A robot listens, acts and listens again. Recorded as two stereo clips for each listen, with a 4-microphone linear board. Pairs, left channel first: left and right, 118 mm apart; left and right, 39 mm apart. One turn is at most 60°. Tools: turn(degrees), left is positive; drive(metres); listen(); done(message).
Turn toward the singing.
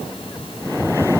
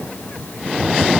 listen()
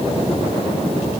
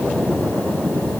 listen()
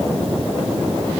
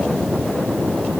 done("I can't make out singing to turn to.")